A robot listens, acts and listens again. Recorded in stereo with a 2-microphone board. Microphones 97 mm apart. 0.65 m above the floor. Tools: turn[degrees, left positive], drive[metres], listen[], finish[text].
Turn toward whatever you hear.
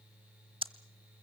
Thought: The ticking: about 65° right or 115° right.
Action: turn[-65]
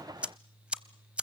Thought: So it is at 15° right.
Action: turn[-15]
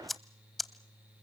Action: finish[Found it: ticking, straight ahead.]